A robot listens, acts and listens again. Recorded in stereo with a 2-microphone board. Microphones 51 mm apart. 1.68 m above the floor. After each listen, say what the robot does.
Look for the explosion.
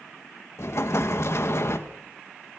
Turn 60° left.
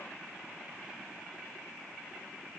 Keep listening.
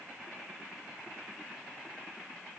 I heard an explosion, but can't make it out now. It was about straight ahead or 60° left.